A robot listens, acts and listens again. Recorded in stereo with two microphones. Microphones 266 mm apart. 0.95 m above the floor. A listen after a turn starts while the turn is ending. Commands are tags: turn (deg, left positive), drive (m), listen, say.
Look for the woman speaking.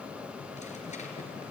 <listen/>
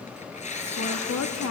<turn deg="70"/>
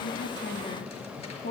<turn deg="40"/>
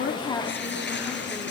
<listen/>
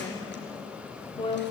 <turn deg="20"/>
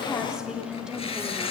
<say>Facing the woman speaking, 2 to 4 m away.</say>